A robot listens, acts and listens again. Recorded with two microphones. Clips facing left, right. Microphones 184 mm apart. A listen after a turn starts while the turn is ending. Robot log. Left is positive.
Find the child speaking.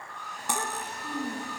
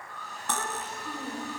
note: The child speaking: about 60° left or 120° left.
cmd yaw +60
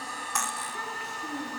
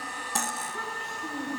end: Facing the child speaking, over 4 m away.